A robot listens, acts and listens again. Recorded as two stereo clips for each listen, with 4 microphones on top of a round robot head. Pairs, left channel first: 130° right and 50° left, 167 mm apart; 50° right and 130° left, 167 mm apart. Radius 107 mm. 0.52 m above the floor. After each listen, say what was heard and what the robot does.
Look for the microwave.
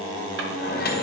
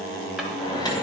The microwave: 115° right. Turn 115° right.
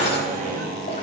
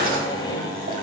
The microwave is now 15° left. Turn 15° left.
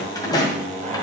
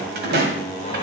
Keep listening.
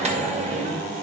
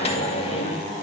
Found it: a microwave, straight ahead, 2 to 4 m away.